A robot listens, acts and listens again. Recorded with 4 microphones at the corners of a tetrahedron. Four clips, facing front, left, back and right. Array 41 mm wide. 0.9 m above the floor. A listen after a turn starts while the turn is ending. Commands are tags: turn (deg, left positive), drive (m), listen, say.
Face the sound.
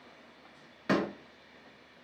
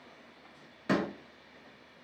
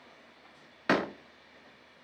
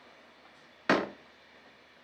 <turn deg="-130"/>
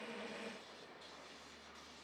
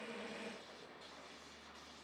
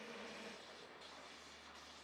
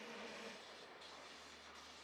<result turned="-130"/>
<say>I heard a door slam from this way, but can't make it out now.</say>